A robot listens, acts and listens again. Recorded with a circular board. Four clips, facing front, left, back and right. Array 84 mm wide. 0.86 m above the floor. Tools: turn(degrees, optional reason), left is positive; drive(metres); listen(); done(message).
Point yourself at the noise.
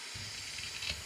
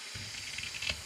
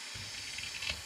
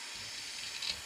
turn(degrees=105, reason="The scissors: 105° left.")
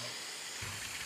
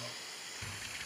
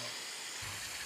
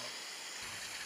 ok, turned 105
listen()
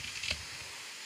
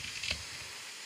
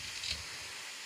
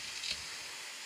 turn(degrees=45, reason="The scissors is now 45° left.")
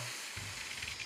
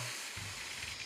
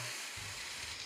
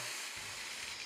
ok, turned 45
listen()
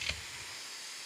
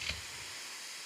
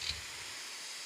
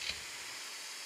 turn(degrees=15, reason="The scissors is now 15° left.")
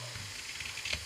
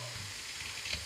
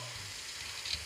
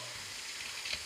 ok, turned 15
done("Facing the scissors.")